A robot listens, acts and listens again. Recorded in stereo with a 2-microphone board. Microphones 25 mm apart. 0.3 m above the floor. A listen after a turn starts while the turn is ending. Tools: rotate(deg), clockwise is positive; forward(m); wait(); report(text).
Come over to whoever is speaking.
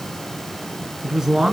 rotate(20)
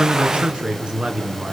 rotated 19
rotate(140)
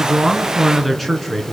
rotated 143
forward(1.0)
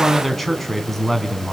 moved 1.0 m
forward(1.0)
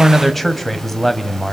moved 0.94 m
rotate(-10)
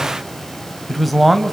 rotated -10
forward(1.0)
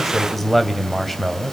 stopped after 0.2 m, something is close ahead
report("Arrived at the man speaking, straight ahead.")